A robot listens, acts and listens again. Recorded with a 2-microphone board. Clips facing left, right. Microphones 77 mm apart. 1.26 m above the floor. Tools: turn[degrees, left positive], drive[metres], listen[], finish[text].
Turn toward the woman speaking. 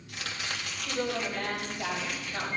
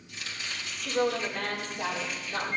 Thought: The woman speaking: about 60° right or 120° right.
Action: turn[-60]
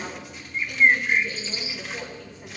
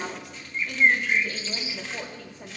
Thought: So it is at 75° right.
Action: turn[-75]
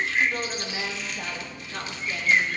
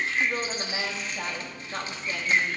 Thought: The woman speaking is now 50° right.
Action: turn[-50]
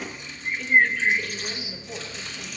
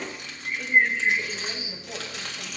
Thought: The woman speaking is now 10° right.
Action: turn[-10]
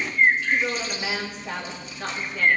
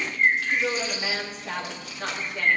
Action: finish[Facing the woman speaking.]